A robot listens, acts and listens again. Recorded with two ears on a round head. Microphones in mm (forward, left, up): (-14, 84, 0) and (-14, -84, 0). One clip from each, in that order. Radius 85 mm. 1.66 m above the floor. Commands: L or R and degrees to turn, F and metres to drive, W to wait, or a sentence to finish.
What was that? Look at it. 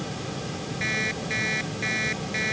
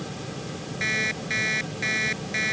R30
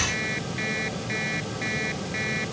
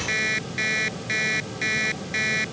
R135
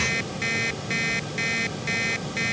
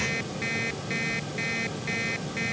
L25
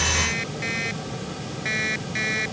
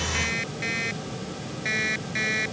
Found it: an alarm clock, straight ahead.